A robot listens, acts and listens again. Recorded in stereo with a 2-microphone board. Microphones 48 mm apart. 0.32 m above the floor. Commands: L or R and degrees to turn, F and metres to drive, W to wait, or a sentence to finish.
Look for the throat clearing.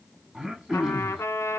R30
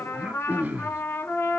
R135
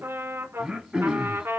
R15
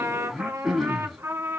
Facing the throat clearing, under 1 m away.